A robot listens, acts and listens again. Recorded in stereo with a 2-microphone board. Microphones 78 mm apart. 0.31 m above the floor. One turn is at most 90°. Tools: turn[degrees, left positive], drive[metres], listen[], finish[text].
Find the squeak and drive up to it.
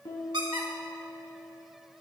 Action: turn[-90]
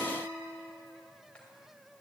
Action: listen[]
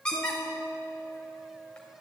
Thought: The squeak is now 10° left.
Action: turn[10]
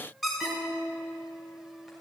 Action: drive[1.0]
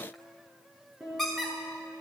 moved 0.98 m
Action: drive[1.0]
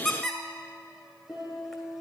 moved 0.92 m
Action: drive[1.0]
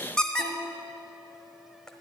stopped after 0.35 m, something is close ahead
Thought: The squeak is now 10° left.
Action: turn[10]
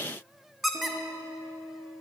Action: finish[I am next to the squeak.]